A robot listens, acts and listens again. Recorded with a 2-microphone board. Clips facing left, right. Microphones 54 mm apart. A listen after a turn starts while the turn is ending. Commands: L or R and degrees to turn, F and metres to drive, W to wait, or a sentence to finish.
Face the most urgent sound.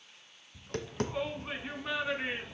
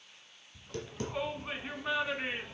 R30
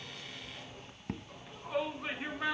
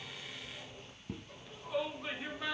L25
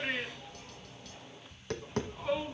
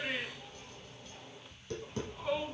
Facing the shout, 2 to 4 m away.